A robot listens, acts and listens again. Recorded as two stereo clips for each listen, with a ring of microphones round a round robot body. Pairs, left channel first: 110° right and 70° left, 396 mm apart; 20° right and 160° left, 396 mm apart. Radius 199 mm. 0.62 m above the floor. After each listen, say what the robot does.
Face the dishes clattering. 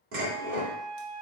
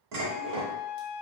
Turn 125° left.
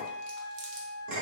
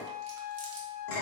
Turn 20° left.
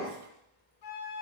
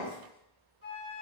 Facing the dishes clattering.